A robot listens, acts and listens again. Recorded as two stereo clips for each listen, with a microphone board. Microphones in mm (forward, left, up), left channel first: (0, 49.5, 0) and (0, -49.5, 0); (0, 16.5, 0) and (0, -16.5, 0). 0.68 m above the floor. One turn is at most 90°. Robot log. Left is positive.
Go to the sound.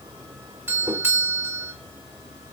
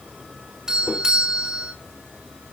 note: The doorbell: about 25° right or 155° right.
cmd yaw -25
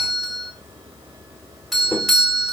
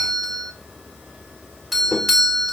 cmd fwd 1.0
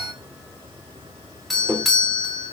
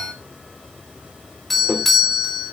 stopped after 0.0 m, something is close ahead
end: Something is in my way. I am facing the doorbell but have not reached it.